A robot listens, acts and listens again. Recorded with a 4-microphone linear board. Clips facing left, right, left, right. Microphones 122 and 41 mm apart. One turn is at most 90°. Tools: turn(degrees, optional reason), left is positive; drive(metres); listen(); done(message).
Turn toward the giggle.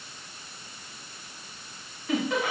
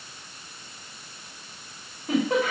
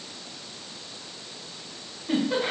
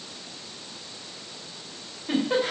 turn(degrees=-35, reason="The giggle: about 35° right or 145° right.")
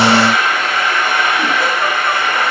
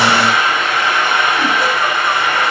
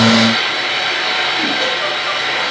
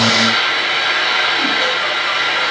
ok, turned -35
listen()
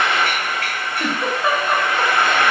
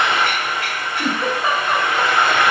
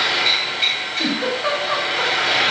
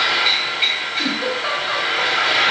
done("Found it: a giggle, straight ahead, 2 to 4 m away.")